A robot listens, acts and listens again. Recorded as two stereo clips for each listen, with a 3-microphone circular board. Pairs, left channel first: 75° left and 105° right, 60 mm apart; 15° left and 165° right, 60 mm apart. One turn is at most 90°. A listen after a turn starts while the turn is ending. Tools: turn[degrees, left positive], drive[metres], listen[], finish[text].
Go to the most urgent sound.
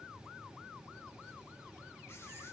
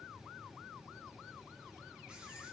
Action: listen[]
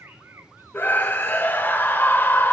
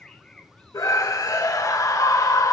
Thought: The scream: 20° left.
Action: turn[20]
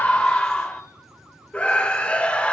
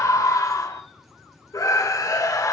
Action: drive[1.0]
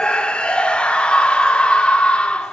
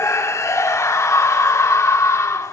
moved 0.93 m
Action: drive[1.0]
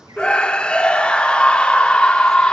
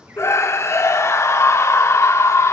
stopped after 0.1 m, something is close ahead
Action: finish[I am next to the scream.]